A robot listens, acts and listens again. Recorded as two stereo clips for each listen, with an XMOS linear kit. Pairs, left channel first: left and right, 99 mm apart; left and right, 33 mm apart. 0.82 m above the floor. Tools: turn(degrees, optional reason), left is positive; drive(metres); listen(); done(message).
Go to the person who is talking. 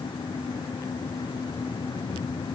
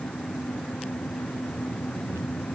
listen()
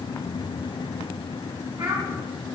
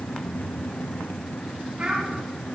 turn(degrees=-55, reason="The child speaking: about 55° right or 125° right.")
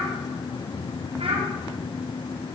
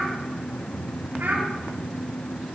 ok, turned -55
turn(degrees=-70, reason="So it is at 70° right.")
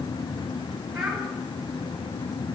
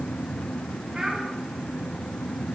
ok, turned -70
drive(metres=1.0)
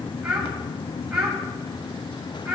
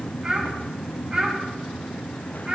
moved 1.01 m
turn(degrees=-10, reason="The child speaking is now 10° right.")
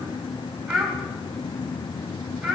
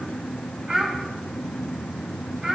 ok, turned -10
drive(metres=1.0)
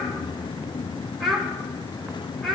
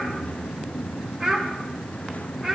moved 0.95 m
drive(metres=1.0)
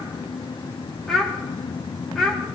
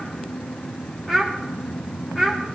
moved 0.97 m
drive(metres=1.0)
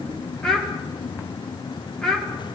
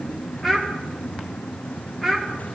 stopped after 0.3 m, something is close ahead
done("Arrived at the child speaking, straight ahead.")